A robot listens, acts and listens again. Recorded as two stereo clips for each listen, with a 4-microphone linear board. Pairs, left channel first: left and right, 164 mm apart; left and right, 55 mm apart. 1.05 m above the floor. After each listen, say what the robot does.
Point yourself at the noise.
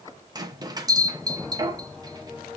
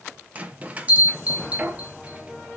Turn 25° right.
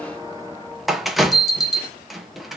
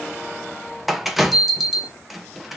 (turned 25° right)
Found it: a bell, straight ahead.